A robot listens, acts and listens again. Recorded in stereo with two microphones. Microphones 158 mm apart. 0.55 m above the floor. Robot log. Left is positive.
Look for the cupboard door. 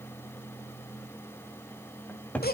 cmd yaw +30
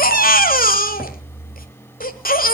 cmd idle
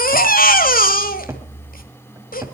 note: So it is at 20° right.
cmd yaw -20
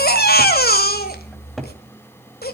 cmd idle
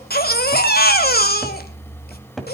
end: Facing the cupboard door.